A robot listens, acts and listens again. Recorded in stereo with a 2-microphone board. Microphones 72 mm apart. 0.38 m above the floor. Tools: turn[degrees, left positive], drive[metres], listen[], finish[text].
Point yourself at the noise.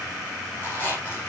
Thought: The squeak: about 30° left or 150° left.
Action: turn[30]
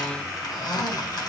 Thought: So it is at 120° left.
Action: turn[120]
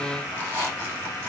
Thought: The squeak is now 25° left.
Action: turn[25]
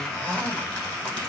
Thought: The squeak is now 15° left.
Action: turn[15]
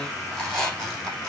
Action: finish[Found it: a squeak, straight ahead, over 4 m away.]